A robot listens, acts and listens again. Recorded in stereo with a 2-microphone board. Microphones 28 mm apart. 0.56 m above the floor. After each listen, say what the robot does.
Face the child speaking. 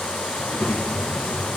Turn 90° left.
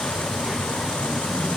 Facing the child speaking, 2 to 4 m away.